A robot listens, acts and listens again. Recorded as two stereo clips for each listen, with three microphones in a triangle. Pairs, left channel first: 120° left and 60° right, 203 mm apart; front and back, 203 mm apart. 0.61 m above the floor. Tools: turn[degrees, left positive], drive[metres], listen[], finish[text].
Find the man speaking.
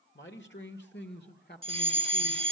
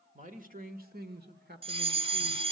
Thought: The man speaking: 150° left.
Action: turn[150]
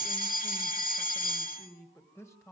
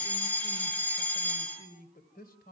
Thought: The man speaking is now 45° left.
Action: turn[45]
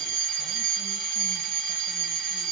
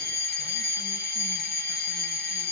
Action: listen[]
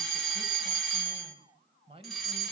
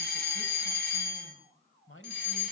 Action: finish[Found it: a man speaking, straight ahead.]